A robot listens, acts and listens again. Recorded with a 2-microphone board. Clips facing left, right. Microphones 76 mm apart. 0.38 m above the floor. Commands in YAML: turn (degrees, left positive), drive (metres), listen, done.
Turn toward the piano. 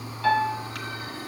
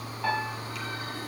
turn: -30
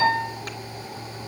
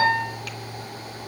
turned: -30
turn: -140
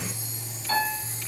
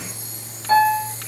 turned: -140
turn: -30
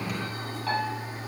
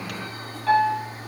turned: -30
done: "Found it: a piano, straight ahead, over 4 m away."